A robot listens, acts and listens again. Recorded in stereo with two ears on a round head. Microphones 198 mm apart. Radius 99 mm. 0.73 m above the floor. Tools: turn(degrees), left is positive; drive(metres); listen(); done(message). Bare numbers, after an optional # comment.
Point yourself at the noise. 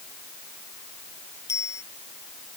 turn(30)
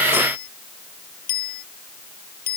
# So it is at 135° left.
turn(135)
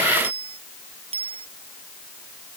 # The bicycle bell is now 25° right.
turn(-25)
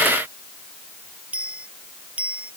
done("Found it: a bicycle bell, straight ahead.")